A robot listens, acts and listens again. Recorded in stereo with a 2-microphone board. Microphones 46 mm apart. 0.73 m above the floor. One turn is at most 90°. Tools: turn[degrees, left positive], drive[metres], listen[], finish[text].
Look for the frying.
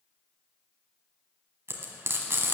Thought: The frying: about 70° right or 110° right.
Action: turn[-70]
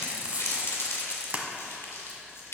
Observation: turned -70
Thought: So it is at 35° right.
Action: turn[-35]
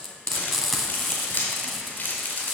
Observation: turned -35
Action: finish[Found it: frying, straight ahead.]